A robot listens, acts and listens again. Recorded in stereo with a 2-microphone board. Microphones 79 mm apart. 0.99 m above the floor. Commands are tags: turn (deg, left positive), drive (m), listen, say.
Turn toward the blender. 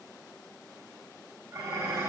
<listen/>
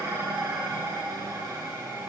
<listen/>
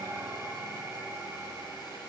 <say>I can't make out a blender to turn to.</say>